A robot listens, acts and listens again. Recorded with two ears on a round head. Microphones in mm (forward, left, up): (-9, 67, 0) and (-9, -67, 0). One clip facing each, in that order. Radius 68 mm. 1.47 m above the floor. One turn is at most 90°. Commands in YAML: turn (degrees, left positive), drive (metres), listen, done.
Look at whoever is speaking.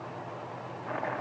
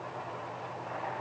listen: true
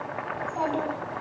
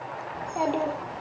turn: -20
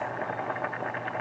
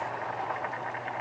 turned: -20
listen: true
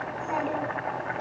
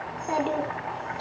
turn: -90
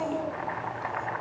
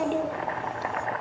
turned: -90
turn: -40
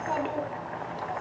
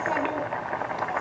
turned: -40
done: "Found it: a child speaking, straight ahead."